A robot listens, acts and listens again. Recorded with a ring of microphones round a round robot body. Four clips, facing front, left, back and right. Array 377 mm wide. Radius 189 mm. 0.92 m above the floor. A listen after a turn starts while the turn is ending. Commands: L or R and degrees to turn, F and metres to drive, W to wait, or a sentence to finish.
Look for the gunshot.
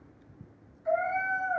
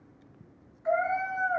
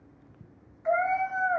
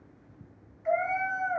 W
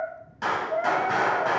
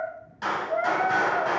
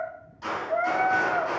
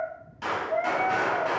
L10
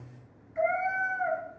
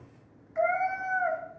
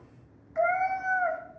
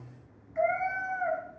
I heard a gunshot from this way, but can't make it out now.